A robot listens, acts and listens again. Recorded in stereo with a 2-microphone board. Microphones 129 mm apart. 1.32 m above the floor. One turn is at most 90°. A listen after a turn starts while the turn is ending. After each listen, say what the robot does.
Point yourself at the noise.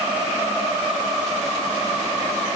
Keep listening.
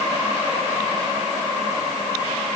Keep listening.
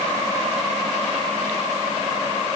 I can't make out anything.